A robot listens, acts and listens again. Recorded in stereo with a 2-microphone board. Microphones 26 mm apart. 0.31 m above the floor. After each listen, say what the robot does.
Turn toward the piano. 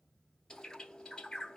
Keep listening.
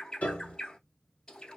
Turn 65° left.
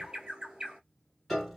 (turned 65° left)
Facing the piano, 1 to 2 m away.